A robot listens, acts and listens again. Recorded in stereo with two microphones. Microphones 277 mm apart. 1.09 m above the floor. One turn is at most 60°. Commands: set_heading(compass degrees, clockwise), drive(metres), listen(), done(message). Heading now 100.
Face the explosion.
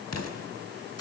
set_heading(40)
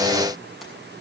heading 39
listen()
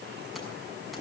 done("I heard an explosion, but can't make it out now. It was about 5° left or 55° left.")